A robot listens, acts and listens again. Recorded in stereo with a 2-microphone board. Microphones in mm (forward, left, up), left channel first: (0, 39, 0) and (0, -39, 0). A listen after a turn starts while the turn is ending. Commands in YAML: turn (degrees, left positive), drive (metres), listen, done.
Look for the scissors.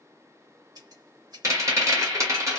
turn: -60
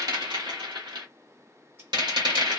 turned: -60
listen: true
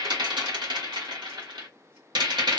listen: true
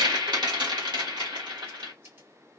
turn: -35
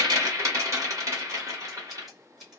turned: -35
done: "Found it: scissors, straight ahead, 1 to 2 m away."